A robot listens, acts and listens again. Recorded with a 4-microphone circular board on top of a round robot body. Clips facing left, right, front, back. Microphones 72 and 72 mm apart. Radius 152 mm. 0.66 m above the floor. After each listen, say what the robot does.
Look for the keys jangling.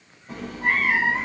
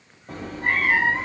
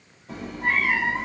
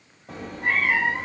Keep listening.
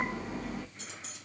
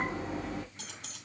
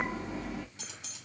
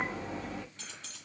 Turn 75° right.
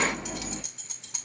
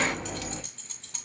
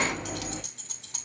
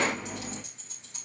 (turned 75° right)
Turn 10° left.
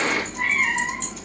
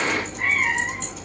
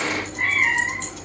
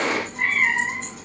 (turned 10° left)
Keep listening.
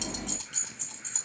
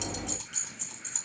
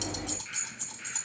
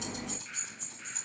Facing the keys jangling.